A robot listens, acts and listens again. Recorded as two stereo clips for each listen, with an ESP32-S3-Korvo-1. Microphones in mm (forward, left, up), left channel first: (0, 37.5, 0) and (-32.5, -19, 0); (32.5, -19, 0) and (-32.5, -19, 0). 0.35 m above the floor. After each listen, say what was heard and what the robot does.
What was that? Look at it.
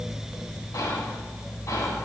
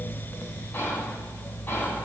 The whispering: 50° left. Turn 50° left.
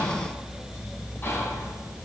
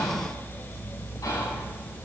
Found it: whispering, straight ahead.